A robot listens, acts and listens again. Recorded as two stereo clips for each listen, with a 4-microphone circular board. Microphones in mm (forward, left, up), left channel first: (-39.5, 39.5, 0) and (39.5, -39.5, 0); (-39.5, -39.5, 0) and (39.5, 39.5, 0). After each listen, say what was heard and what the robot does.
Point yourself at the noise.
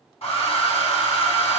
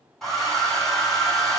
The hair dryer: 140° left. Turn 140° left.
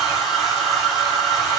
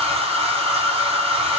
The hair dryer is now 40° left. Turn 40° left.
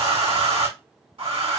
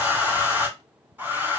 The hair dryer is now 25° right. Turn 25° right.
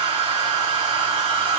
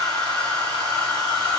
The hair dryer is now 10° left. Turn 10° left.
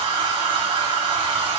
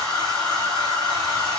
Facing the hair dryer, 2 to 4 m away.